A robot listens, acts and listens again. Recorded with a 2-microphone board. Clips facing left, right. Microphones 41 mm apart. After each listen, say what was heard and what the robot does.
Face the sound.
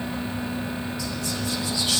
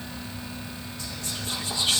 The whispering: about 45° right or 135° right. Turn 45° right.
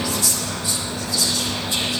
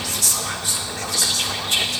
So it is at 85° right. Turn 85° right.
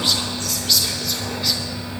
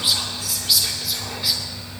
The whispering is now 10° right. Turn 10° right.
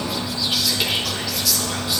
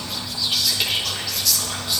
Found it: whispering, straight ahead.